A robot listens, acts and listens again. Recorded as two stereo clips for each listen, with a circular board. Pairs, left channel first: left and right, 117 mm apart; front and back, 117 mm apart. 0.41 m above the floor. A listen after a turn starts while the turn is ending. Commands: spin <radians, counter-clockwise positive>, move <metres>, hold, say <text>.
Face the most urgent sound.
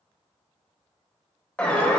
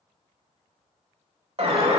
spin 2.88
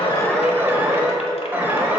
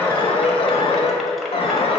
spin -0.35
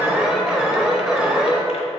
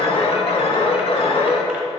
spin -0.17
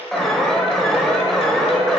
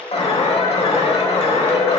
say Facing the alarm.